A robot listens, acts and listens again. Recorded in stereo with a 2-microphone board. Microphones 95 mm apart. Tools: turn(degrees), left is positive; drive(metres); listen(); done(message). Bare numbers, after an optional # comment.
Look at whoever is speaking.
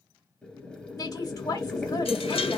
# The woman speaking: about 35° left or 145° left.
turn(35)
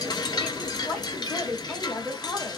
# So it is at 10° left.
turn(10)
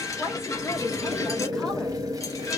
done("Found it: a woman speaking, straight ahead.")